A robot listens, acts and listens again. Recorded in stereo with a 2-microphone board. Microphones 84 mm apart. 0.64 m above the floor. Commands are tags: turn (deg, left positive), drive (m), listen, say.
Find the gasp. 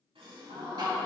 <turn deg="-75"/>
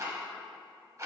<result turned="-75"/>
<listen/>
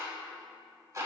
<say>I heard a gasp, but can't make it out now. It was about straight ahead or 30° right.</say>